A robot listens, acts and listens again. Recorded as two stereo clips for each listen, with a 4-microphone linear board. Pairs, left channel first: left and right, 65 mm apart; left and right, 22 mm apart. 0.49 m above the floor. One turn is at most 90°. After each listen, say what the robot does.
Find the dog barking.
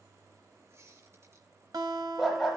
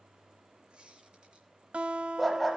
Turn 30° right.
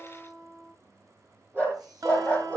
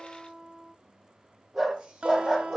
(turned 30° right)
Turn 90° right.
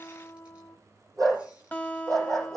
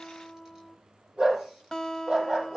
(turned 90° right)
Turn 60° right.
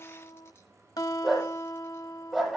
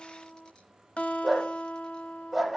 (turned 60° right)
Found it: a dog barking, straight ahead.